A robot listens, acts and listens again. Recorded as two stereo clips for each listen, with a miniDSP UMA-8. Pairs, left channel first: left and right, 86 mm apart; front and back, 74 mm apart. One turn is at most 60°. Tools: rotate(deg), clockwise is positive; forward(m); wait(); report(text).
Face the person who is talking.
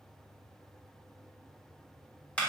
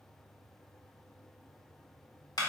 wait()
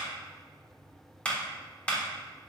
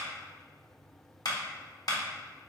wait()
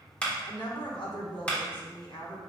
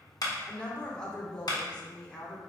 rotate(-60)
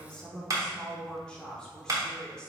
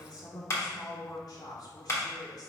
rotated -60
rotate(-10)
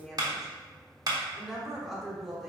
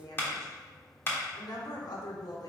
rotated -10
report("Facing the woman speaking, 1 to 2 m away.")